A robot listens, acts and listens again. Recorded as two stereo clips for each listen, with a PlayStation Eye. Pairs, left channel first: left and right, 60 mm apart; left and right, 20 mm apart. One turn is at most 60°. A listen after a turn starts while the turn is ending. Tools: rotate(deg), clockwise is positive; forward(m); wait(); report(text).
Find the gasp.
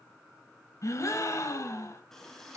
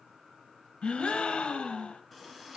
rotate(-55)
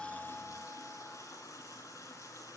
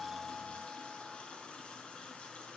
wait()
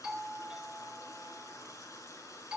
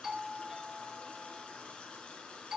report("I heard a gasp, but can't make it out now. It was about straight ahead or 70° left.")